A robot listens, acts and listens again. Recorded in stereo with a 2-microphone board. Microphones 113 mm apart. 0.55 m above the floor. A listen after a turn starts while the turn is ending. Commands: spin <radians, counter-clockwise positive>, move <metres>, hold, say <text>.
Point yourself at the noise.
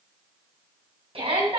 spin -0.96
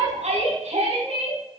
spin -1.31
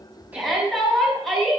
say Facing the shout.